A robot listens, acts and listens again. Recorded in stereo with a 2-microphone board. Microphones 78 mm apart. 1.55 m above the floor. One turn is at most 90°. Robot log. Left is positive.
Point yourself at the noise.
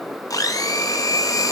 note: The blender: about 50° left or 130° left.
cmd yaw +50
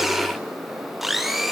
end: Found it: a blender, straight ahead, under 1 m away.